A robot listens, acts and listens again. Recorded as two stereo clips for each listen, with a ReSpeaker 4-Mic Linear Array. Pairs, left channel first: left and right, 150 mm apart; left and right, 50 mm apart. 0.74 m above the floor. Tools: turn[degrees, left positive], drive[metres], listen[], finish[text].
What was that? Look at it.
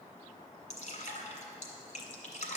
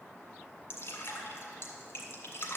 Thought: The dripping: about 50° left or 130° left.
Action: turn[50]
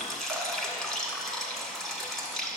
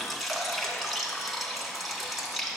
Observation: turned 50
Action: finish[Found it: dripping, straight ahead.]